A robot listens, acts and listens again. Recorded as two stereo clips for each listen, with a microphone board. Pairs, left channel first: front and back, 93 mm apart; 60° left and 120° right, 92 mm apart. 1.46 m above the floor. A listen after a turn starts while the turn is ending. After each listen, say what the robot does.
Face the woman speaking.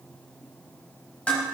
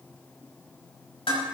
Keep listening.
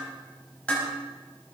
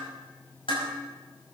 Keep listening.
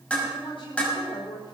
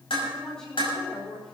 Turn 30° right.
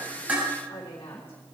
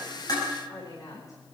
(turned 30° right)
Turn 10° left.
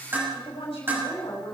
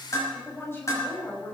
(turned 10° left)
Turn 10° right.
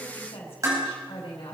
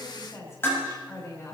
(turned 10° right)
Facing the woman speaking, over 4 m away.